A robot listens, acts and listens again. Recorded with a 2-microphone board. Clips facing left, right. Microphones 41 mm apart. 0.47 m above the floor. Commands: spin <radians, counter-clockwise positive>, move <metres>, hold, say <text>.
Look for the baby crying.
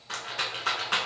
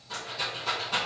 hold
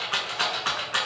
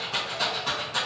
hold
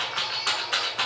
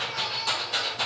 say I can't make out a baby crying, only a rattle.